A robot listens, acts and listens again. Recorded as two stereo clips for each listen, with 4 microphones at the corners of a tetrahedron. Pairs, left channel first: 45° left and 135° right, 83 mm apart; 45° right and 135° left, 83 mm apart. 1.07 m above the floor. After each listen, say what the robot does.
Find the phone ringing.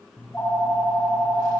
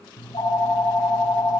Turn 20° right.
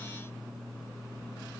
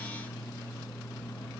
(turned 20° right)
Facing the phone ringing, over 4 m away.